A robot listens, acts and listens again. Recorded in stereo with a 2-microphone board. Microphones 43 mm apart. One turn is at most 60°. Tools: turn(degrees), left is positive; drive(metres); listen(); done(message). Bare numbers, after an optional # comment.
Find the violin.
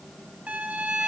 # The violin: about 30° right or 150° right.
turn(-30)
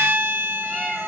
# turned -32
# So it is at 120° right.
turn(-60)
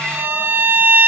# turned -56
# The violin is now 65° right.
turn(-60)
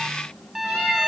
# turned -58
# The violin is now 10° right.
turn(-10)
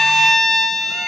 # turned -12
done("Found it: a violin, straight ahead, 1 to 2 m away.")